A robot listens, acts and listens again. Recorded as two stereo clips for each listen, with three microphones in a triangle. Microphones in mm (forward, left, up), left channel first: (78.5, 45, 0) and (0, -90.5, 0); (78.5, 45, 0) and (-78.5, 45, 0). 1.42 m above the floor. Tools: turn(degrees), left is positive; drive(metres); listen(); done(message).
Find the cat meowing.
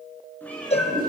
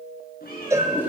turn(degrees=-20)
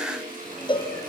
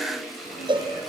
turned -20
listen()
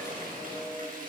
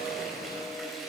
listen()
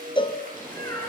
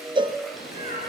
done("Found it: a cat meowing, straight ahead.")